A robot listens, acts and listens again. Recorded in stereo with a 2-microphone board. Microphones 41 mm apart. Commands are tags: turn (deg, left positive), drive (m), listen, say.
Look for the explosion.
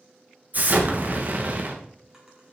<turn deg="-45"/>
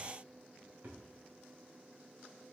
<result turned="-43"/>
<listen/>
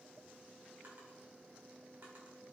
<say>I heard an explosion, but can't make it out now. It was about straight ahead or 90° right.</say>